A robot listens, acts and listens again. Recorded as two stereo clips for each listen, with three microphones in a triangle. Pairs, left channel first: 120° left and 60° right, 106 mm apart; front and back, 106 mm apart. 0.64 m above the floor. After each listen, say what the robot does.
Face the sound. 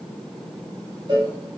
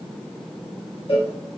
Turn 15° right.
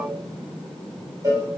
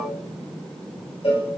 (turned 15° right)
Found it: a cowbell, straight ahead.